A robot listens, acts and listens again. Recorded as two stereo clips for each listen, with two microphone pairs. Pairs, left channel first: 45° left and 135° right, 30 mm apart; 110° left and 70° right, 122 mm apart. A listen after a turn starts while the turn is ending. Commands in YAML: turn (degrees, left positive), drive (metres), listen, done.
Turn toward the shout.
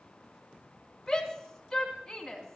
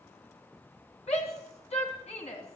turn: 120
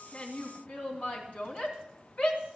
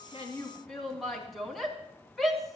turn: 25
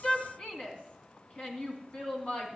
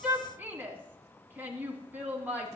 done: "Found it: a shout, straight ahead, 2 to 4 m away."